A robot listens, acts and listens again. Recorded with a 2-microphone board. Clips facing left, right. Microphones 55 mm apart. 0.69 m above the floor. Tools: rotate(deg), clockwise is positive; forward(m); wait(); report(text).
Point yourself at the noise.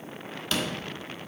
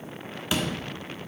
rotate(30)
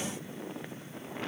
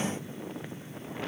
wait()
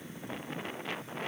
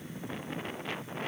report("I heard a door slam, but can't make it out now. It was about 15° left or 135° right.")